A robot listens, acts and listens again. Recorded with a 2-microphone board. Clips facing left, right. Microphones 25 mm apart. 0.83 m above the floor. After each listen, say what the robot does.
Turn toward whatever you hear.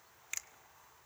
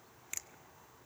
Turn 30° left.
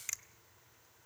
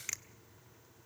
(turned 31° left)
Turn 15° right.
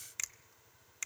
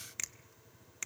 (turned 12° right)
Found it: a finger snap, straight ahead.